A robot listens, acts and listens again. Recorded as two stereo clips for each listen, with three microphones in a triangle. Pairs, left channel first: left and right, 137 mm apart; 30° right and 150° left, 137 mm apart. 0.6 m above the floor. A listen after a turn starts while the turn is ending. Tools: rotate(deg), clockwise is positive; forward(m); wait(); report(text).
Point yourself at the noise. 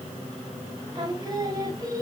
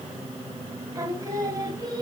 rotate(150)
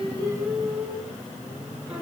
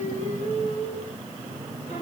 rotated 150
rotate(10)
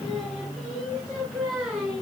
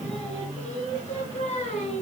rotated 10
report("Facing the singing.")